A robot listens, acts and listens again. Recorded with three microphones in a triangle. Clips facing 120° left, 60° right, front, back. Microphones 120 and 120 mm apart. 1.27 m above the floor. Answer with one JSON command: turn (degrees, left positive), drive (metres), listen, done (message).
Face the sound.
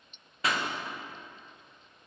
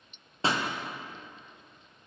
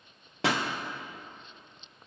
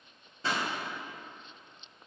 {"done": "Facing the pop, under 1 m away."}